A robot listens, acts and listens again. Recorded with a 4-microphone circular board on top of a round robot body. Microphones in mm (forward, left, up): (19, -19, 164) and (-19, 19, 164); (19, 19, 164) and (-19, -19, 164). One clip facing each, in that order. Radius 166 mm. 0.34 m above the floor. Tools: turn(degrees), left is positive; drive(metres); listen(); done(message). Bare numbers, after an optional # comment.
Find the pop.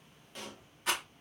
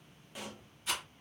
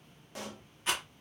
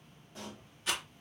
# The pop: 50° left.
turn(50)
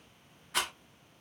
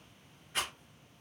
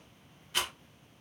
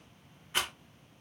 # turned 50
done("Facing where the pop came from. I can't hear it now.")